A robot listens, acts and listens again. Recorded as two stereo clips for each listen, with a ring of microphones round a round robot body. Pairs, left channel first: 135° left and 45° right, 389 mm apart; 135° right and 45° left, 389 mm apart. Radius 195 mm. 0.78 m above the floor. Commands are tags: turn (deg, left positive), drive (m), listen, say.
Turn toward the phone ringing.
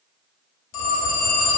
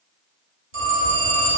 <turn deg="110"/>
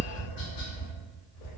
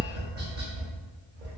<listen/>
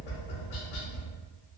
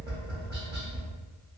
<listen/>
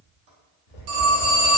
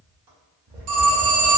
<turn deg="-10"/>
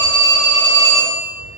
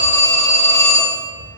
<say>Found it: a phone ringing, straight ahead.</say>